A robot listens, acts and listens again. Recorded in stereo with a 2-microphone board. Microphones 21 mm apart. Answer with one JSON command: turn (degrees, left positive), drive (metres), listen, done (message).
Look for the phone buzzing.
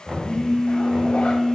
{"turn": 30}
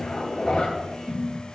{"done": "Facing the phone buzzing."}